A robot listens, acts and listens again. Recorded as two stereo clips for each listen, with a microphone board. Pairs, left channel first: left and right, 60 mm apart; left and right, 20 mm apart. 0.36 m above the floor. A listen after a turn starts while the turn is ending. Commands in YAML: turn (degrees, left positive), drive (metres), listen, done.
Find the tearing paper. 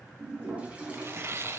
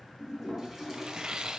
turn: -45
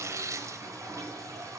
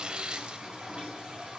listen: true
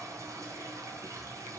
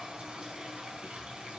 listen: true
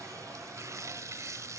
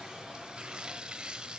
turn: -80
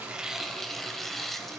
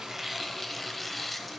done: "Facing the tearing paper."